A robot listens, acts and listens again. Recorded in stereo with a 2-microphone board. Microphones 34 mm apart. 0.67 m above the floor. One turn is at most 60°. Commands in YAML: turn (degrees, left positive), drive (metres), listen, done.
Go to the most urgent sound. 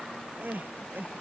turn: -60
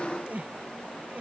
turn: -50
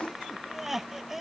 turn: -10
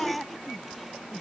drive: 1.0
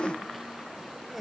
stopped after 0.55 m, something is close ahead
done: "Blocked. The crying is further on, straight ahead."